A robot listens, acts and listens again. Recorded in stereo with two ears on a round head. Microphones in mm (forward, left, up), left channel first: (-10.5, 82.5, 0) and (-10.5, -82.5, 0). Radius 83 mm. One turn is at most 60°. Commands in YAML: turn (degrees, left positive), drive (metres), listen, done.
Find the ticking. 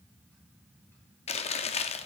listen: true
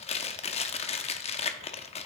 listen: true
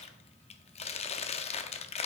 done: "I can't make out ticking, only chewing."